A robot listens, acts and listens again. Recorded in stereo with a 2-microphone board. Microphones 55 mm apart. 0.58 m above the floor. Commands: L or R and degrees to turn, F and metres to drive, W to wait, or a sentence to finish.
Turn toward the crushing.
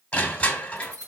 L25
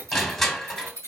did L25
Facing the crushing, 1 to 2 m away.